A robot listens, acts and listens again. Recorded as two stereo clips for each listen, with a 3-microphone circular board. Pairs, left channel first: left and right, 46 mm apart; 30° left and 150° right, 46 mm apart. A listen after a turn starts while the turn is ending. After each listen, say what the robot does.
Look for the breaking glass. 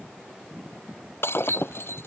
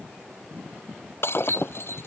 Turn 60° left.
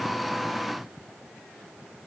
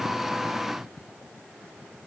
I heard breaking glass from this way, but can't make it out now.